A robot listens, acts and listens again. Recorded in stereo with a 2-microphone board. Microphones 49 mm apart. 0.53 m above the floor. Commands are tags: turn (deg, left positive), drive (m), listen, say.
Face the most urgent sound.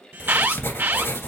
<turn deg="-45"/>
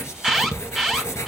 <say>Found it: an alarm, straight ahead.</say>